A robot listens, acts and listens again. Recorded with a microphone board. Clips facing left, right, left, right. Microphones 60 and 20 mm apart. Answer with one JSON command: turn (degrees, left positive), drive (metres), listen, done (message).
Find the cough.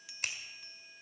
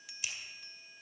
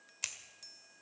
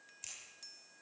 {"listen": true}
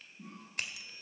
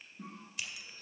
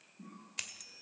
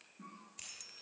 {"turn": -65}
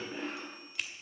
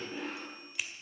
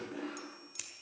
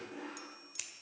{"done": "Facing the cough, over 4 m away."}